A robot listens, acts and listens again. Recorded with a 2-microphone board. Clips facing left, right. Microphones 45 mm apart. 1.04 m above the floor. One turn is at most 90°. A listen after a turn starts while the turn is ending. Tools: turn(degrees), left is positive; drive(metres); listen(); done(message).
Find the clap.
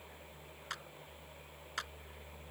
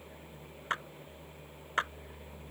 turn(degrees=-35)
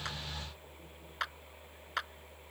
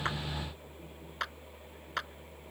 done("Found it: a clap, straight ahead.")